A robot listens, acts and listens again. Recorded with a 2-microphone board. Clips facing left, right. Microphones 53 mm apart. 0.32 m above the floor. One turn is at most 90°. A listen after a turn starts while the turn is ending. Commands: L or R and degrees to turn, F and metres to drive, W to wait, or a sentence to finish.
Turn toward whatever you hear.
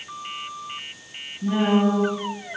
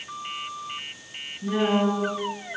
L50
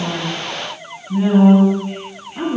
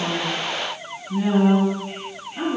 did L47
L50
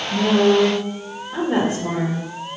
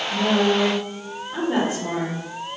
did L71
Found it: a woman speaking, straight ahead, 2 to 4 m away.